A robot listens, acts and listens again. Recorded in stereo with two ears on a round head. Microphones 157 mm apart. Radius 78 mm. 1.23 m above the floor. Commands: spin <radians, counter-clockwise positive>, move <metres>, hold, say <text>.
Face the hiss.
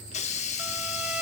spin 0.70
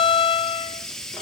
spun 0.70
say Facing the hiss, 1 to 2 m away.